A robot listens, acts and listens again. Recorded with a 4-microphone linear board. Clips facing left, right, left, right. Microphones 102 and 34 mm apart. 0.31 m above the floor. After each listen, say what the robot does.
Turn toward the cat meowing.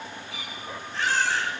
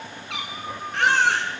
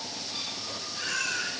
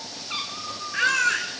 Turn 75° right.
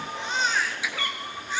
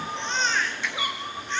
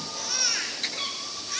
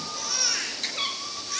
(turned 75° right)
Turn 15° right.
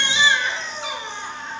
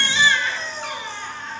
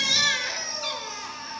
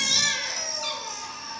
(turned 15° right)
Keep listening.
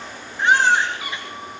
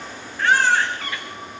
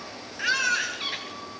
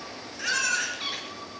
Turn 10° left.
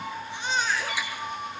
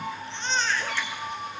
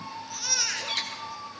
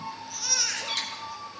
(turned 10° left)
Facing the cat meowing.